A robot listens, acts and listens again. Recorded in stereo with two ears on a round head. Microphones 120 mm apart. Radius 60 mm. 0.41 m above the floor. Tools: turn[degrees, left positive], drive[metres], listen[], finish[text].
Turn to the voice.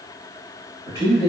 Thought: The man speaking: about 25° right or 155° right.
Action: turn[-25]
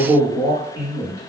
Thought: So it is at 125° right.
Action: turn[-125]
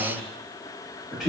Action: finish[Found it: a man speaking, straight ahead, 1 to 2 m away.]